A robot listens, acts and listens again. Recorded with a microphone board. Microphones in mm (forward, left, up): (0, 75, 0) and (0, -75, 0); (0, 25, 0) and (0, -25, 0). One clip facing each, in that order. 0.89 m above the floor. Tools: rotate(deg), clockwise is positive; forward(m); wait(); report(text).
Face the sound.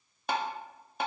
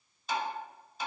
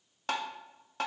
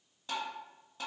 rotate(-60)
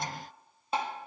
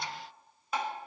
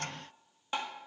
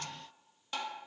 rotate(-30)
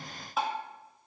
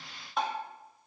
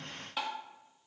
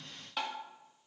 report("Facing the tapping, 1 to 2 m away.")